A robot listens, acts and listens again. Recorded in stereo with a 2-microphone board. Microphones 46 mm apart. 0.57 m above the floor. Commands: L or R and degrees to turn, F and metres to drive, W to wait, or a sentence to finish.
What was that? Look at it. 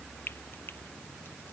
L50
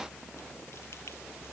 W
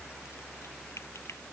L80
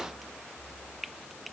Facing the frying.